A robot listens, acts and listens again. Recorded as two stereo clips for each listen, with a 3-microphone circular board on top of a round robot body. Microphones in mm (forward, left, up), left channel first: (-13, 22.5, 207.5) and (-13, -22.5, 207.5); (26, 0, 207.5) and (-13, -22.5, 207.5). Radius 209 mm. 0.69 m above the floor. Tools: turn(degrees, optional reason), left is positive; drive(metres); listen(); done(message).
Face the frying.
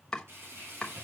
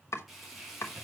turn(degrees=-60, reason="The frying: 60° right.")
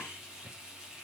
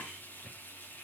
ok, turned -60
turn(degrees=-15, reason="The frying is now 15° right.")
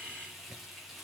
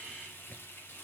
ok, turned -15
done("Found it: frying, straight ahead, 2 to 4 m away.")